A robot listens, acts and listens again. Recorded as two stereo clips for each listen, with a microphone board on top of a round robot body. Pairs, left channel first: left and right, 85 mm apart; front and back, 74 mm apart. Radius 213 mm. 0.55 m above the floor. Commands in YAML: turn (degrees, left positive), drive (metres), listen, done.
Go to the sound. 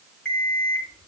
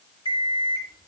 turn: 10
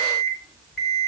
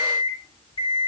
drive: 1.0
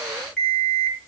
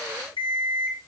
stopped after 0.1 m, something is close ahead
done: "Something is in my way. I am facing the alarm clock but have not reached it."